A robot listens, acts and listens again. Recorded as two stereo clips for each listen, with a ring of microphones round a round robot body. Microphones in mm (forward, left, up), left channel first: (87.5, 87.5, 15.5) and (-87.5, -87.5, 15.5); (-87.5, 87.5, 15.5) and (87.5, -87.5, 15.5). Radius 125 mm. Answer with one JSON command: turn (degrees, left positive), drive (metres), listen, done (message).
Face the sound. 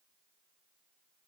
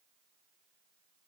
{"listen": true}
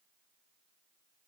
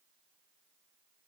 {"listen": true}
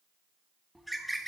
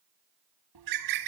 {"turn": -45}
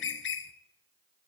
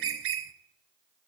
{"done": "Facing the bird, under 1 m away."}